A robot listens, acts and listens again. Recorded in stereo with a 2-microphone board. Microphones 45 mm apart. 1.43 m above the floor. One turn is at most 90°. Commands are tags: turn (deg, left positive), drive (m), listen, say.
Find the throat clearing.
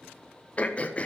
<turn deg="30"/>
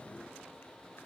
<listen/>
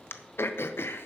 <turn deg="90"/>
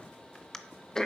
<turn deg="10"/>
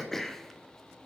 <say>Facing the throat clearing.</say>